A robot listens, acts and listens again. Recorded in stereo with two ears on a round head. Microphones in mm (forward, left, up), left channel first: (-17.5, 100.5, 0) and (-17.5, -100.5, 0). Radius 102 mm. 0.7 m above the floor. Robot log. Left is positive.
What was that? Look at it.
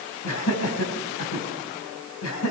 cmd yaw +90
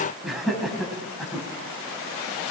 end: Facing the laughter, over 4 m away.